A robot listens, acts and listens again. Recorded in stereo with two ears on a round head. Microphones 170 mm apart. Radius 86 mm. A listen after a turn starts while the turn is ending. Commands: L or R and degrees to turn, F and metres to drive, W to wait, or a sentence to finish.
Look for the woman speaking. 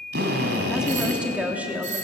R30
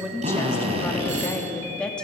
Facing the woman speaking.